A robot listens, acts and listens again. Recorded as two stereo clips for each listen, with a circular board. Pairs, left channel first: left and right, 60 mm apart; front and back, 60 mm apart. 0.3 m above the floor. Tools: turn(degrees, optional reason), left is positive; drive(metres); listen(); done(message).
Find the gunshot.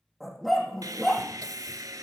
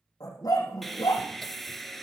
listen()
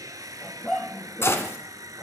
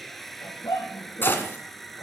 turn(degrees=50, reason="The gunshot: 50° left.")
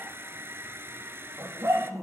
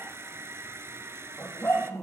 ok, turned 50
done("Facing where the gunshot came from. I can't hear it now.")